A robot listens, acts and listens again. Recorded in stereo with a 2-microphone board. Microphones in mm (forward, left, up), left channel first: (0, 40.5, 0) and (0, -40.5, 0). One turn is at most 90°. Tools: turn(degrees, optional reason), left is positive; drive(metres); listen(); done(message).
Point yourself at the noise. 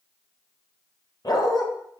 turn(degrees=55, reason="The dog barking: about 55° left or 125° left.")
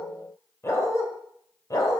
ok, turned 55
turn(degrees=45, reason="So it is at 45° left.")
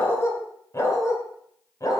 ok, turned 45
turn(degrees=45, reason="The dog barking is now 45° left.")
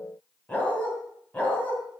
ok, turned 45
turn(degrees=20, reason="The dog barking is now 20° left.")
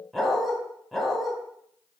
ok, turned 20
done("Found it: a dog barking, straight ahead, 2 to 4 m away.")